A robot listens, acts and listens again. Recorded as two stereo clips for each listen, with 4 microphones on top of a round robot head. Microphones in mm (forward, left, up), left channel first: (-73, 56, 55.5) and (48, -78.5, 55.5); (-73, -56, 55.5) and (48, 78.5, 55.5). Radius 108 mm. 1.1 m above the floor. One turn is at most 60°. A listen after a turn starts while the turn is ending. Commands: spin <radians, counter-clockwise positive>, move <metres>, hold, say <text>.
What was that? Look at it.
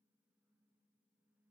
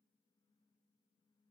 hold
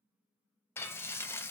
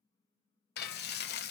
spin -1.05
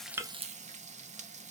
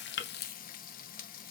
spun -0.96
spin -1.05
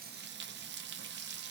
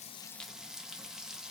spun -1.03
spin -0.70
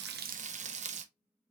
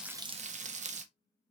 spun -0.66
say Facing the frying, under 1 m away.